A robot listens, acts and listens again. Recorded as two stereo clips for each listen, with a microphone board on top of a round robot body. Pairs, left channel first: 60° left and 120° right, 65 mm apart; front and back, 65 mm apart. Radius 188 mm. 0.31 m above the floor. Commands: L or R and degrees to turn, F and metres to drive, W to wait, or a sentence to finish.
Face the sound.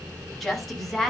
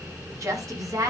L145
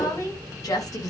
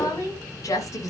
L35
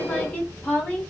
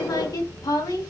R10
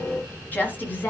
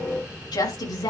Facing the woman speaking.